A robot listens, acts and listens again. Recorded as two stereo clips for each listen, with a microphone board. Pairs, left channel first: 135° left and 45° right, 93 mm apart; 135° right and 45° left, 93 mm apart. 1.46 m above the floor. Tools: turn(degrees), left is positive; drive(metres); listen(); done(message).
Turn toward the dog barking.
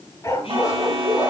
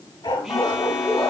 turn(degrees=-175)
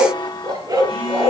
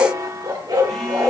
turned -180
done("Facing the dog barking, over 4 m away.")